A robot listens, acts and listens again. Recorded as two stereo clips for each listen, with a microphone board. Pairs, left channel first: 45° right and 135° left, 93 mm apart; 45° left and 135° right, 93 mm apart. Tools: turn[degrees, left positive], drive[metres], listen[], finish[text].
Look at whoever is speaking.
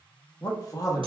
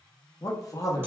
Action: finish[Facing the man speaking, under 1 m away.]